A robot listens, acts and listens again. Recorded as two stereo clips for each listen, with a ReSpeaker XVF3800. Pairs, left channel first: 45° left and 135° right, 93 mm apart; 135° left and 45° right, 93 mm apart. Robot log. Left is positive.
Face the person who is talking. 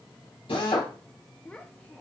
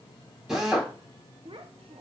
note: The child speaking: 30° right.
cmd yaw -30
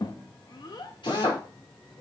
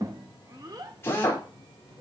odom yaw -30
end: Found it: a child speaking, straight ahead.